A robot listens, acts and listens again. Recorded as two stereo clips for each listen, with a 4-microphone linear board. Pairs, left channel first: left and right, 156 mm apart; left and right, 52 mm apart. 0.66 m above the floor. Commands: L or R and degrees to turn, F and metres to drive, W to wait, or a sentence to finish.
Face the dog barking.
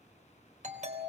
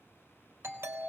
W
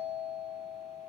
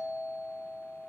W
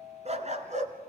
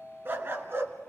R50
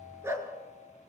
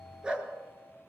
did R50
R20
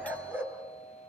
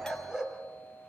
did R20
R15
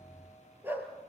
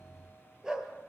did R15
R15
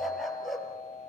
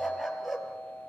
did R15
Facing the dog barking, 2 to 4 m away.